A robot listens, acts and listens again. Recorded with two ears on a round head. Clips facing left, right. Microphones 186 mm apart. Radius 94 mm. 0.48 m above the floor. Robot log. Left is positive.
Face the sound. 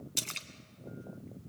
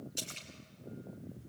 note: The splash: about 65° left or 115° left.
cmd yaw +65
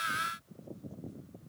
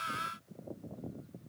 cmd idle
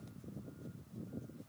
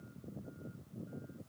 end: I heard a splash, but can't make it out now. It was about straight ahead or 50° left.